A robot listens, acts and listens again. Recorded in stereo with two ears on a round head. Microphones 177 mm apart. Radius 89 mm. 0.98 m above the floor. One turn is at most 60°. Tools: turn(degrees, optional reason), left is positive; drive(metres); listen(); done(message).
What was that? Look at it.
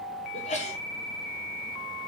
turn(degrees=35, reason="The sneeze: about 35° left or 145° left.")
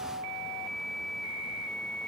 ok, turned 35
listen()
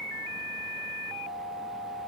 done("I heard a sneeze, but can't make it out now. It was about straight ahead or 110° left.")